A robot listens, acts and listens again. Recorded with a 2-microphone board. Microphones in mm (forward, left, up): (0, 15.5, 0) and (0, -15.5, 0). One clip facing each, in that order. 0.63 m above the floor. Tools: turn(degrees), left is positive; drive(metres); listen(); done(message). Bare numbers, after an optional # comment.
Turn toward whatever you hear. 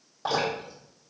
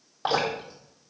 # The dripping: about 40° right or 140° right.
turn(-40)
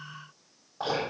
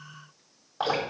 # So it is at 100° right.
turn(-100)
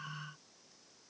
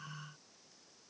listen()
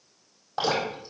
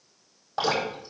done("Facing the dripping, over 4 m away.")